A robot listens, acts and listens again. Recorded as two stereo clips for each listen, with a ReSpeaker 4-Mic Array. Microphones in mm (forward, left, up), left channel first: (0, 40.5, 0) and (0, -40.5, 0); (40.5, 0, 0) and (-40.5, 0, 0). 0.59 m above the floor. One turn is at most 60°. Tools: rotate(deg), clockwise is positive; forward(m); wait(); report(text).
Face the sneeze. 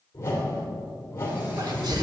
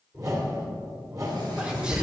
rotate(60)
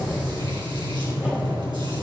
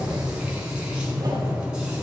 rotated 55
rotate(45)
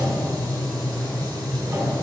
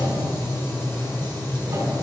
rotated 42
report("Facing where the sneeze came from. I can't hear it now.")